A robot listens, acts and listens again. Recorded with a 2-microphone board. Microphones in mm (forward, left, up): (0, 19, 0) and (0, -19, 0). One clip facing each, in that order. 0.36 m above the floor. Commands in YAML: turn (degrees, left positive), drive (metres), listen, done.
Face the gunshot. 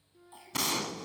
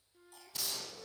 turn: 90
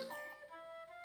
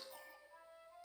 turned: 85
done: "Facing where the gunshot came from. I can't hear it now."